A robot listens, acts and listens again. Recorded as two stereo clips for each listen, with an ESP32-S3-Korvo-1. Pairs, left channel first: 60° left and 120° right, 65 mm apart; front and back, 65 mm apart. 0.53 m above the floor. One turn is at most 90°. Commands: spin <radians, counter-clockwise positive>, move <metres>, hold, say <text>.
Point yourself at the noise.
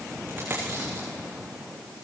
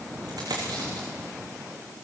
spin 1.57
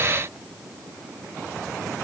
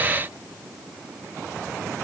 spin 1.57
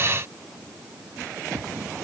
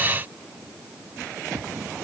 say Facing where the dropped coin came from. I can't hear it now.